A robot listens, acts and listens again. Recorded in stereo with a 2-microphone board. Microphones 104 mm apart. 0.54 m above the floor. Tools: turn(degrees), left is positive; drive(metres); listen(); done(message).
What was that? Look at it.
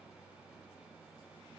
listen()
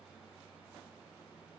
listen()
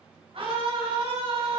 turn(degrees=-60)
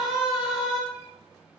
done("Facing the scream.")